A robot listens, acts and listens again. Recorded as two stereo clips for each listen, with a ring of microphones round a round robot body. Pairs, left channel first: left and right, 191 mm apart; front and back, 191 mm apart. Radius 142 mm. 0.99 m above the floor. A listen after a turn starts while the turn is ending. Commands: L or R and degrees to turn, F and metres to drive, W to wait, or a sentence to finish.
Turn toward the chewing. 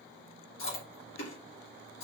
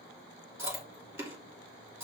L105
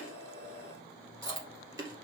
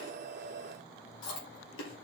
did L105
R20
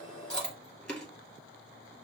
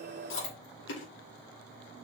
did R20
Found it: chewing, straight ahead, 2 to 4 m away.